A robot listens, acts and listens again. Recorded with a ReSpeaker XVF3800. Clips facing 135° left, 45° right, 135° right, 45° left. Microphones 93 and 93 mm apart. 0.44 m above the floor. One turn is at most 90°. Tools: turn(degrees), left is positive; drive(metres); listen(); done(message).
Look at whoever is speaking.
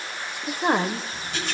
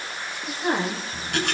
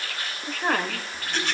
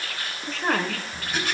turn(degrees=90)
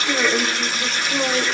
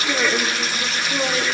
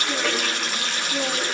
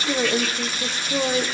turn(degrees=50)
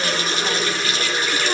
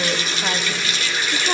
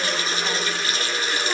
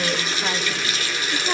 listen()
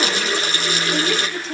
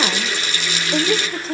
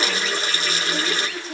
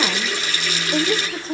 done("Found it: a woman speaking, straight ahead, 1 to 2 m away.")